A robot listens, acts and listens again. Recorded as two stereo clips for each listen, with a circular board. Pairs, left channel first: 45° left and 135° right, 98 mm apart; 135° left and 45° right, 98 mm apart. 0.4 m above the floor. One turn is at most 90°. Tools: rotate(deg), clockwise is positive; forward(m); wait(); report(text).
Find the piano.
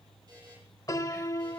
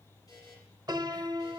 report("Facing the piano, under 1 m away.")